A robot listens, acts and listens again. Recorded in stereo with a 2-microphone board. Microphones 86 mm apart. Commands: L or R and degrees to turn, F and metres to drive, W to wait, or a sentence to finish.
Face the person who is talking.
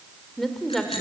L30
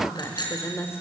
L150
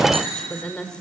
L10
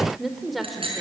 Found it: a woman speaking, straight ahead, 2 to 4 m away.